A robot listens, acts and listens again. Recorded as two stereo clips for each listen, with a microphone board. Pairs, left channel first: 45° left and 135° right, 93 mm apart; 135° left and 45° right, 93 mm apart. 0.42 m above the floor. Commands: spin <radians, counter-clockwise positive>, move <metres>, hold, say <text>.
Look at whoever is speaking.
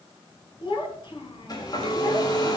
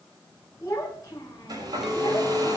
spin 1.40
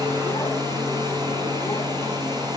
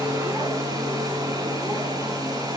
hold
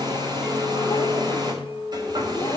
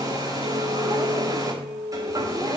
hold
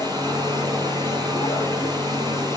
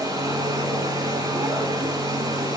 say Facing where the child speaking came from. I can't hear it now.